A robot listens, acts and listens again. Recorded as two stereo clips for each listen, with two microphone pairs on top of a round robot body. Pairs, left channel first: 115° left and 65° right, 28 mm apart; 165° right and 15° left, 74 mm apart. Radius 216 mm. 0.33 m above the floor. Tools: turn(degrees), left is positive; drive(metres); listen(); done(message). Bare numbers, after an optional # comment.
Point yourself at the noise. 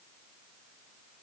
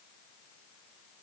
listen()
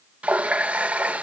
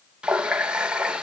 # The running tap: 60° right.
turn(-60)
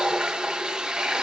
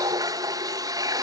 # The running tap is now 15° right.
turn(-15)
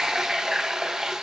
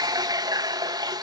done("Facing the running tap, 1 to 2 m away.")